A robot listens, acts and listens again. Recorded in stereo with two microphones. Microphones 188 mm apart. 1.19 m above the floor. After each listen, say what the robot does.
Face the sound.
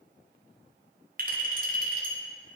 Turn 50° right.
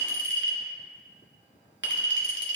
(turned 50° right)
Turn 80° right.
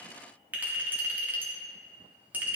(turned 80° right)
Turn 10° right.
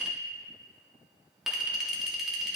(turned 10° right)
Found it: a clink, straight ahead.